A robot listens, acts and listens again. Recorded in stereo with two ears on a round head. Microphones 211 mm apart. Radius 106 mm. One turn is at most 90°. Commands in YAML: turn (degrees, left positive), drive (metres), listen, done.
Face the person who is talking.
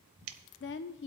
turn: 50
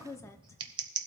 turn: 15
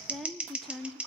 done: "Facing the woman speaking, under 1 m away."